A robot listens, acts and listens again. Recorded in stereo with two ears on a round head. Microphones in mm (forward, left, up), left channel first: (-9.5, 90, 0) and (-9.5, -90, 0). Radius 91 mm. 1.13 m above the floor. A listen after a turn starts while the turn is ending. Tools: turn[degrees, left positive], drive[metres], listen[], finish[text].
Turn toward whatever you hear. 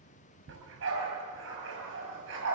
Thought: The dog barking: about 65° right or 115° right.
Action: turn[-65]
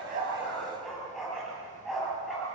Action: finish[Facing the dog barking, over 4 m away.]